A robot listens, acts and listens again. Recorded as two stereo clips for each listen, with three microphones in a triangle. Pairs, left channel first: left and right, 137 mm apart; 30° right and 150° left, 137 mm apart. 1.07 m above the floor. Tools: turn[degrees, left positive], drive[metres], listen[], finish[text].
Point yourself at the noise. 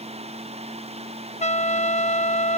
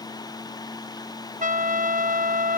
Thought: The trumpet: 125° left.
Action: turn[125]
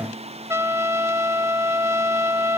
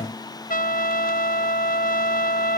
Thought: The trumpet is now 15° right.
Action: turn[-15]
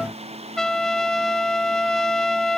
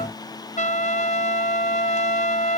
Action: finish[Facing the trumpet.]